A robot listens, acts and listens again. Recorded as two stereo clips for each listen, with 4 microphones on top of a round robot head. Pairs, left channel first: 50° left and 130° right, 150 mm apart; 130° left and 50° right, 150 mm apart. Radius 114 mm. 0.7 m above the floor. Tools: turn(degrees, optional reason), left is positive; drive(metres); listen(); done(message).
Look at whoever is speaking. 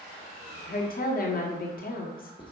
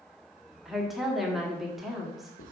turn(degrees=40, reason="The woman speaking: 40° left.")
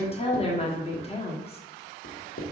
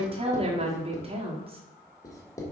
done("Facing the woman speaking, 1 to 2 m away.")